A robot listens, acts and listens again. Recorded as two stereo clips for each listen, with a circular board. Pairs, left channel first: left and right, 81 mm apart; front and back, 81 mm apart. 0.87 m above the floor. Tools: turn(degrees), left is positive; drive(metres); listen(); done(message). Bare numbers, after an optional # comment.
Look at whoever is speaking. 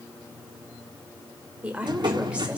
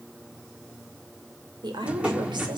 # The woman speaking: 165° right.
turn(-165)
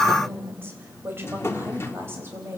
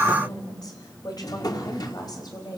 # The woman speaking is now 30° right.
turn(-30)
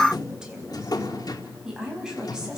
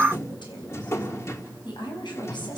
# The woman speaking is now 10° right.
turn(-10)
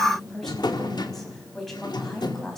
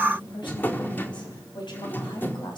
done("Facing the woman speaking.")